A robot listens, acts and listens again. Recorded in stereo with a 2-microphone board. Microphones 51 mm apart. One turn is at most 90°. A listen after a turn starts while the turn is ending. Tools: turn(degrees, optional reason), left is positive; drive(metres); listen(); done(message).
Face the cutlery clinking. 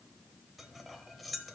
turn(degrees=30)
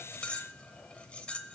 turn(degrees=90, reason="So it is at 150° left.")
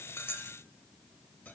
turn(degrees=60, reason="Nothing new. It was at 60° left.")
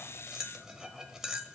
turn(degrees=-10, reason="The cutlery clinking is now 10° right.")
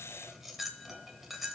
done("Found it: cutlery clinking, straight ahead, under 1 m away.")